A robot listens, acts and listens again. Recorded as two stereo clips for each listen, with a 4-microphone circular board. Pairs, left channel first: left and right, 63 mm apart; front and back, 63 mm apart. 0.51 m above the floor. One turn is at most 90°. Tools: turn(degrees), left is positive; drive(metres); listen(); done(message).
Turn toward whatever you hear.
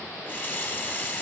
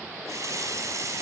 turn(degrees=90)
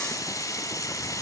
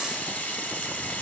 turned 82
turn(degrees=65)
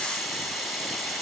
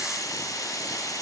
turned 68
done("Facing the running tap, 2 to 4 m away.")